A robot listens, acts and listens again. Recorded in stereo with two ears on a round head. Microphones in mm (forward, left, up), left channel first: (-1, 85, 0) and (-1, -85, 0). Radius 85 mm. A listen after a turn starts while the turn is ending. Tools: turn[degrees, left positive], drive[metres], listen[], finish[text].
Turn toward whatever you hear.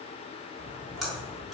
Action: turn[30]
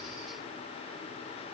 Action: listen[]
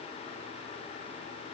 Action: finish[I heard a splash, but can't make it out now. It was about 30° right or 150° left.]